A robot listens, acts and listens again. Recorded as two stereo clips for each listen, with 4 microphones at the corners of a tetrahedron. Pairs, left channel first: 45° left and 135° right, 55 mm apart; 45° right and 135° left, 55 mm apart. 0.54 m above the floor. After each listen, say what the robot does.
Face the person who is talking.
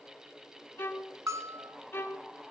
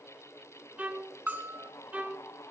Keep listening.
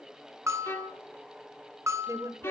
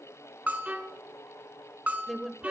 Turn 135° right.
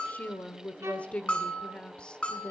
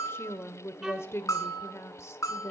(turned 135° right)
Turn 25° right.
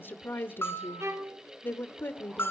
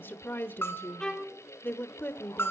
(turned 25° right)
Facing the woman speaking, 1 to 2 m away.